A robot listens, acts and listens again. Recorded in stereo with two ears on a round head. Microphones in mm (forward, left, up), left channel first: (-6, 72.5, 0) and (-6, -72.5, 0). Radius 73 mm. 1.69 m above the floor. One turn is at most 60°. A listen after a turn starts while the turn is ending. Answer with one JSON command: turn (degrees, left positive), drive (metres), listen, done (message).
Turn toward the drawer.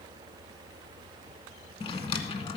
{"turn": 35}
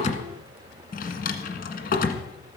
{"turn": 60}
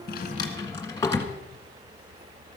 {"turn": 20}
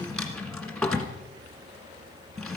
{"done": "Found it: a drawer, straight ahead, 1 to 2 m away."}